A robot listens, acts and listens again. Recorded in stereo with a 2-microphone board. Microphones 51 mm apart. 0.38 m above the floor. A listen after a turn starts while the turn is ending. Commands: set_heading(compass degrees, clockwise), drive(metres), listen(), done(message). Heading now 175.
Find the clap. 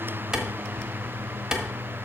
set_heading(205)
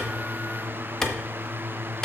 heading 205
set_heading(190)
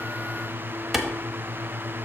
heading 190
done("Facing the clap.")